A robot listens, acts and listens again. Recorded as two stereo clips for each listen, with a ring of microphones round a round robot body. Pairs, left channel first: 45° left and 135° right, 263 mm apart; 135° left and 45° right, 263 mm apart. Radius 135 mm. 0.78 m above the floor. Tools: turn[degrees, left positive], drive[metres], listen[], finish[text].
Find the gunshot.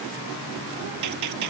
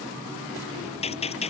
Thought: The gunshot: 155° right.
Action: turn[-155]
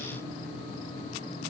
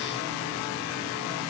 Action: finish[Facing where the gunshot came from. I can't hear it now.]